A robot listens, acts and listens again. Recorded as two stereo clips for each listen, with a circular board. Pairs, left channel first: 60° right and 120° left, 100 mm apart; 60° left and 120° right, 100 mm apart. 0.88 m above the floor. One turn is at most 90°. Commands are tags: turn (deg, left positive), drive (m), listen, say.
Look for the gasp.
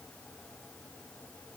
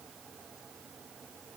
<listen/>
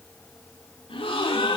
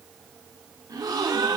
<turn deg="-75"/>
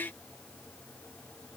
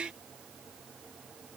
<say>I heard a gasp from this way, but can't make it out now.</say>